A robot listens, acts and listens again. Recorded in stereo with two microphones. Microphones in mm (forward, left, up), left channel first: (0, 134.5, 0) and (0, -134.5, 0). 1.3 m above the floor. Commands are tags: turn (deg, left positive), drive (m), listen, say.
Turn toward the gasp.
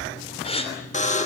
<turn deg="20"/>
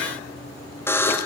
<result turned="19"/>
<listen/>
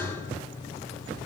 <say>I heard a gasp, but can't make it out now. It was about 5° left or 140° left.</say>